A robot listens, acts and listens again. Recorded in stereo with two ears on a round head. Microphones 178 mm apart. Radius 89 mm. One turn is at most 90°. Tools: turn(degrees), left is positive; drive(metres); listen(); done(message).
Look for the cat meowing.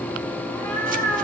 turn(degrees=-30)
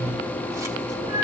turn(degrees=-90)
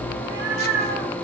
turn(degrees=-55)
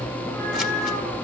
turn(degrees=10)
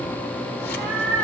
done("Found it: a cat meowing, straight ahead, over 4 m away.")